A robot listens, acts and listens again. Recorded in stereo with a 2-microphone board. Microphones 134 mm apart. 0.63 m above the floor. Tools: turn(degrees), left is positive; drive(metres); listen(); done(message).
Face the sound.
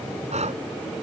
turn(degrees=-55)
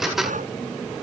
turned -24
turn(degrees=-100)
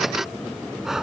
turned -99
done("Facing the breathing.")